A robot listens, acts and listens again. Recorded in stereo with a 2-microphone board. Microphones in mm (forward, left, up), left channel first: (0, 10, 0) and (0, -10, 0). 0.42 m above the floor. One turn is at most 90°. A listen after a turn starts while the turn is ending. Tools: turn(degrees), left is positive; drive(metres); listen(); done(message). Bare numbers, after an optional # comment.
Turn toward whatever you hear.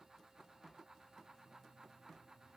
listen()
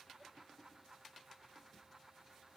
listen()
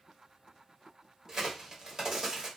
# The crack: about 35° right or 145° right.
turn(-35)
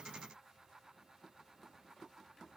listen()
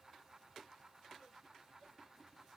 done("I heard a crack, but can't make it out now. It was about straight ahead or 110° right.")